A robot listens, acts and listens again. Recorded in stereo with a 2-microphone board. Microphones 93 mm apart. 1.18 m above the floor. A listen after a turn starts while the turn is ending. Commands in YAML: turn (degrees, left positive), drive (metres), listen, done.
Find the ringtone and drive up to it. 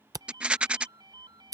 turn: -50
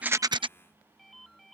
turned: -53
drive: 1.0
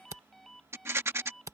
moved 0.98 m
drive: 1.0
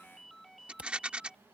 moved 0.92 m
drive: 1.0
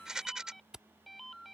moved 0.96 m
drive: 1.0
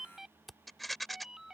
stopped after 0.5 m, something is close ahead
done: "Arrived at the ringtone, straight ahead."